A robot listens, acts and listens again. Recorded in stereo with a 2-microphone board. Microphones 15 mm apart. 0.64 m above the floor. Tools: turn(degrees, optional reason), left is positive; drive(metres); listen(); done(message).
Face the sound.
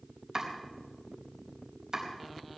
turn(degrees=-50, reason="The chopping: about 50° right or 130° right.")
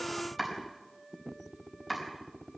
done("Found it: chopping, straight ahead, over 4 m away.")